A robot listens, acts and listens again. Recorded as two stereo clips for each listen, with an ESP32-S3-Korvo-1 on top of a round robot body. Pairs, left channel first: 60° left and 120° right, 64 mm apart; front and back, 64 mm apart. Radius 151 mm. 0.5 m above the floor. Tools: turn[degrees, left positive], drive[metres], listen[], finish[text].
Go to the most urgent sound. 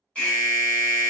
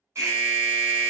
Thought: The alarm: 130° left.
Action: turn[130]
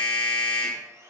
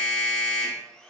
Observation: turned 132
Action: drive[1.0]
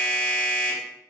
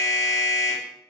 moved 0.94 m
Thought: The alarm is now 10° right.
Action: turn[-10]
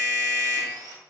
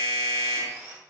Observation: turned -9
Action: drive[1.0]
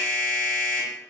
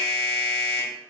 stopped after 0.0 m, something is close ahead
Action: finish[Arrived at the alarm, straight ahead.]